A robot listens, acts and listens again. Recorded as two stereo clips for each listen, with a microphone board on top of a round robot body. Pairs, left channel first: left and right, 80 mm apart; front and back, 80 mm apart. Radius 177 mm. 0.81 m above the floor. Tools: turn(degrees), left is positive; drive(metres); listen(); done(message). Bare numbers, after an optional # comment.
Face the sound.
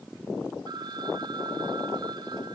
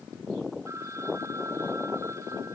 # The phone ringing: 125° right.
turn(-125)
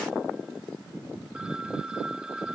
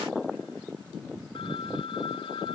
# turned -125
# The phone ringing is now 10° right.
turn(-10)
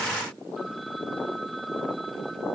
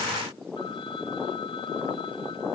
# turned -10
listen()
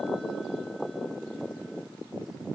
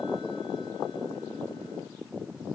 listen()
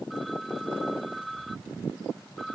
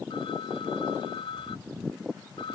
done("Found it: a phone ringing, straight ahead.")